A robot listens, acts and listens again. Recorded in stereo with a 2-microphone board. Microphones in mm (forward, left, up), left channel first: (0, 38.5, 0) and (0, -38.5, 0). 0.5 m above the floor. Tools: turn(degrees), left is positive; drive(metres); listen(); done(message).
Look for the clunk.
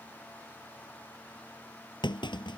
turn(degrees=90)
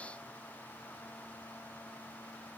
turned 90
done("Facing where the clunk came from. I can't hear it now.")